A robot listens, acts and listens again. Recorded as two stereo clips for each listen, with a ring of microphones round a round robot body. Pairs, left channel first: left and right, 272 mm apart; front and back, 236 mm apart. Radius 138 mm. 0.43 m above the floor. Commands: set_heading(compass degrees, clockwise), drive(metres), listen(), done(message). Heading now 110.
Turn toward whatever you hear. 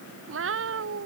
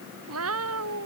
set_heading(245)
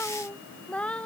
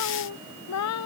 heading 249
done("Found it: a cat meowing, straight ahead.")